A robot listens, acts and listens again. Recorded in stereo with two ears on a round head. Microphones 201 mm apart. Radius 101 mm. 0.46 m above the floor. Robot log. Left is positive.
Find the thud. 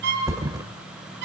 note: The thud: about 15° right or 165° right.
cmd yaw -15
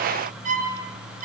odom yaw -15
cmd idle
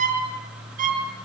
end: I heard a thud, but can't make it out now. It was about straight ahead or 150° right.